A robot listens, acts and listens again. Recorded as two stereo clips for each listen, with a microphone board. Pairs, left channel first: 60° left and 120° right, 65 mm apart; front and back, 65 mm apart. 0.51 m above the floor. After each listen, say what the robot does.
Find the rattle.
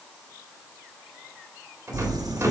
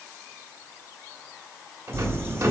Turn 165° right.
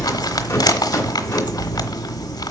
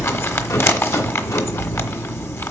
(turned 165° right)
Keep listening.
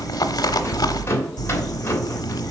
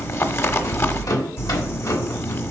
Turn 15° left.
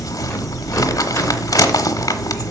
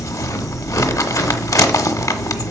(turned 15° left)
Keep listening.
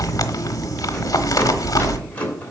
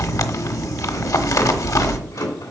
Facing the rattle, 2 to 4 m away.